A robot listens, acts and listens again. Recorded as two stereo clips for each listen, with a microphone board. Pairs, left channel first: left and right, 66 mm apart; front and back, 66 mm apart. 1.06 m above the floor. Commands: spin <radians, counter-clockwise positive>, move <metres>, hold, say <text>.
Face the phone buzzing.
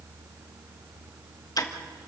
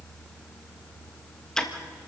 hold
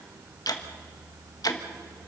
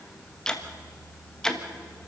hold
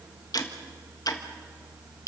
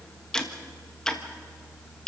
say I can't make out a phone buzzing, only ticking.